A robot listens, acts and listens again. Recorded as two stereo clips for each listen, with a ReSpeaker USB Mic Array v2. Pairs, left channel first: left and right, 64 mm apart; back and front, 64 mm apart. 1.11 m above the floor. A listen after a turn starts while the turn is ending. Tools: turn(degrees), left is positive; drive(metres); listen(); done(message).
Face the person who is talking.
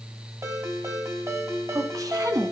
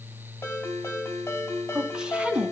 turn(degrees=-70)
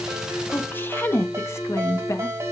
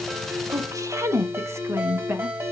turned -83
turn(degrees=55)
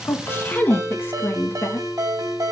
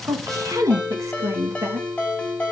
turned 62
turn(degrees=35)
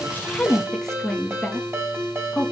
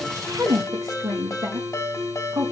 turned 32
done("Found it: a woman speaking, straight ahead.")